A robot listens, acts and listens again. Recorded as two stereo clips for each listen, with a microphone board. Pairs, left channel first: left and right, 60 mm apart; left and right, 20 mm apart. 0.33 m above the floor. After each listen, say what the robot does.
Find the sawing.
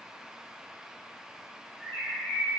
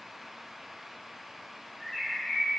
Keep listening.
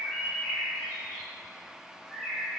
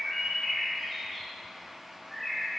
Keep listening.
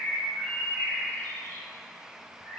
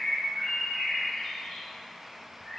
I can't make out sawing to turn to.